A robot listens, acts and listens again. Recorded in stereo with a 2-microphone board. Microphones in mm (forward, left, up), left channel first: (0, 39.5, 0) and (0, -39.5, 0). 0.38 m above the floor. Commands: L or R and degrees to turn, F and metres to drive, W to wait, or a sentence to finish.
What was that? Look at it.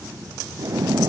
R45
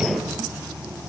Facing the splash.